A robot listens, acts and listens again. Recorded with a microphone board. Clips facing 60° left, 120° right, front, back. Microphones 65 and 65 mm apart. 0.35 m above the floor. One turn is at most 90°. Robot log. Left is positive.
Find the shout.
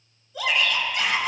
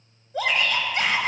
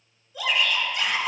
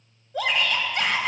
note: The shout: 155° right.
cmd yaw -90
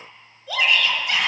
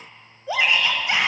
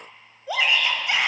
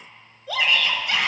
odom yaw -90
note: The shout is now 65° right.
cmd yaw -65
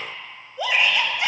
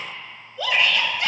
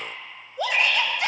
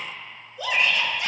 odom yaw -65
note: The shout is now 10° right.
cmd yaw -10
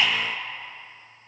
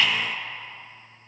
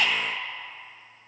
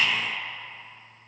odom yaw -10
end: Facing the shout.